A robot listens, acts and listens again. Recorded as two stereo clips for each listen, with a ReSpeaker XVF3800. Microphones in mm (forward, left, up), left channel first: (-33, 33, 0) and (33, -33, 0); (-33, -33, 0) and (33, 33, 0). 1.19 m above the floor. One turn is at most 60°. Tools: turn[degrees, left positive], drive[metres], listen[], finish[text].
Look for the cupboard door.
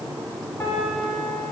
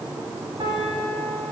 Action: listen[]
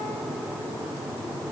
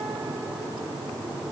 Action: listen[]
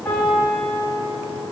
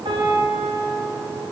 Action: finish[I can't make out a cupboard door to turn to.]